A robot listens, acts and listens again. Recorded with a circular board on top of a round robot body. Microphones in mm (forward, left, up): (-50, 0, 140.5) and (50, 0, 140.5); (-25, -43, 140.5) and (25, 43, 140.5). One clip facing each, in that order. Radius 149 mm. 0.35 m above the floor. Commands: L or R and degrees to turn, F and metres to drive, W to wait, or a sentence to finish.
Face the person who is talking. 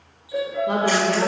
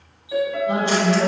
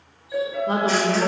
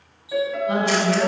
R175
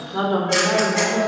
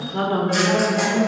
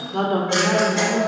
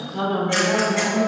R135
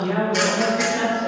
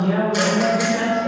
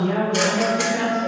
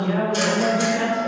R65
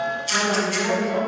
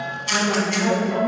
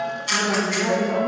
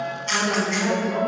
R25
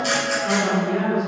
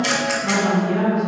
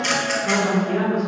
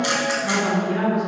Found it: a woman speaking, straight ahead, 2 to 4 m away.